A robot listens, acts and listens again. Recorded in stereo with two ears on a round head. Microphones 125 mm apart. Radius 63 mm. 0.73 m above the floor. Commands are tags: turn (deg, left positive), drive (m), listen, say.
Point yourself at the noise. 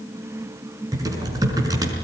<turn deg="-25"/>
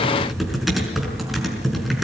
<say>Found it: typing on a keyboard, straight ahead, over 4 m away.</say>